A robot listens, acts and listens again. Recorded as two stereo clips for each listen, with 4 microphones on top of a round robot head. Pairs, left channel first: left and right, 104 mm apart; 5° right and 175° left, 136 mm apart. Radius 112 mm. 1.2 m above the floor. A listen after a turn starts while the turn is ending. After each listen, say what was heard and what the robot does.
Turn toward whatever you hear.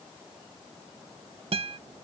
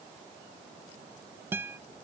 The guitar: 110° right. Turn 110° right.
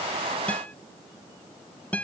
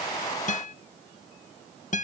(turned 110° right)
The guitar is now 15° left. Turn 15° left.
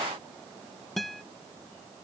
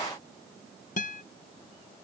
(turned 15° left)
Facing the guitar.